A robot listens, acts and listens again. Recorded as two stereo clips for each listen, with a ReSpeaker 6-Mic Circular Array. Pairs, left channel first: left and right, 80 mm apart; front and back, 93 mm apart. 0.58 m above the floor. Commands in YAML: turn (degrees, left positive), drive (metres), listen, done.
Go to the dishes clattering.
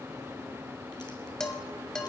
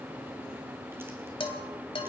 drive: 1.0
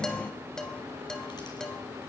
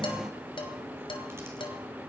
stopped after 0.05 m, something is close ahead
turn: 10
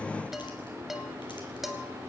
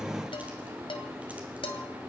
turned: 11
done: "Something is in my way. I am facing the dishes clattering but have not reached it."